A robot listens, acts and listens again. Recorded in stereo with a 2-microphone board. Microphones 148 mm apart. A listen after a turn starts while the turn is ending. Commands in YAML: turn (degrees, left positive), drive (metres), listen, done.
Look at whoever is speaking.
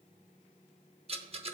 listen: true
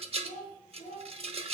turn: 90
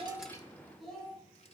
done: "Facing the child speaking."